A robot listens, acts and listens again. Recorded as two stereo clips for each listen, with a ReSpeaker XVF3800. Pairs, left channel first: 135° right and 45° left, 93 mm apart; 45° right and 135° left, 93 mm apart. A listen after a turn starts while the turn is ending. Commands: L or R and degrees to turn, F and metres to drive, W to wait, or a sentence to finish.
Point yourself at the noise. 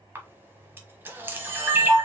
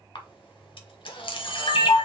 R20
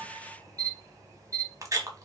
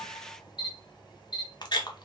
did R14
R10
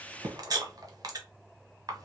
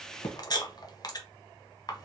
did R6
Found it: a camera shutter, straight ahead, under 1 m away.